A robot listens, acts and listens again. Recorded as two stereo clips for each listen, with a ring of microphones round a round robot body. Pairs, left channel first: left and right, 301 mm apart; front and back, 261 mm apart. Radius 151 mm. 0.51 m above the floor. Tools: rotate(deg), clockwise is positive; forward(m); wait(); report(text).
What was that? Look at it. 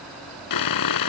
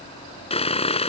rotate(-70)
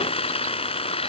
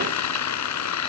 rotate(-20)
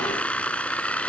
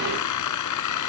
report("Found it: sawing, straight ahead.")